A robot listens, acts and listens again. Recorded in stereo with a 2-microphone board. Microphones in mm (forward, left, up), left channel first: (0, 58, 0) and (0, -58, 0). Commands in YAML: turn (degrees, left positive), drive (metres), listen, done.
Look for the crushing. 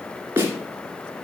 listen: true
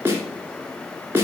listen: true
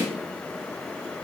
done: "I can't make out crushing to turn to."